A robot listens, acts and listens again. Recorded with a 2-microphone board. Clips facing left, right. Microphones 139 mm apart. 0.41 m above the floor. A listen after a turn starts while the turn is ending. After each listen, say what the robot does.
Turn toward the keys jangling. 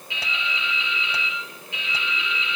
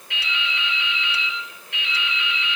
Keep listening.
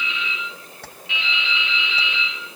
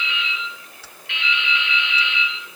Turn 65° left.
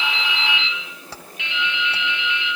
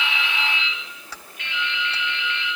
Turn 35° left.
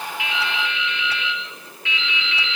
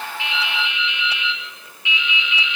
Keep listening.
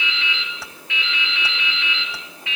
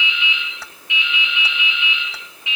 Keep listening.
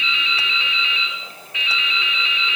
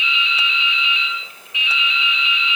I heard keys jangling from this way, but can't make it out now.